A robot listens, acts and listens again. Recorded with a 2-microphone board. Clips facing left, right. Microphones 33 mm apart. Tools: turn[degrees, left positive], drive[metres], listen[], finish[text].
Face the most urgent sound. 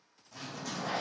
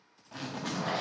Action: listen[]
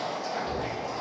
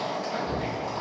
Thought: The shout: about 30° left or 150° left.
Action: turn[30]
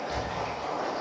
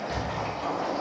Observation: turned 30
Action: finish[Found it: a shout, straight ahead.]